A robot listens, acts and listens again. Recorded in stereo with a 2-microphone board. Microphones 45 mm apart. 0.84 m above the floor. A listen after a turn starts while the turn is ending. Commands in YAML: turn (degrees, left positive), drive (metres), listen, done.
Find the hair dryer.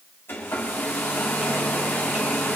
turn: 60
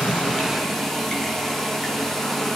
turn: 10
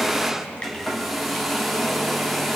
done: "Found it: a hair dryer, straight ahead."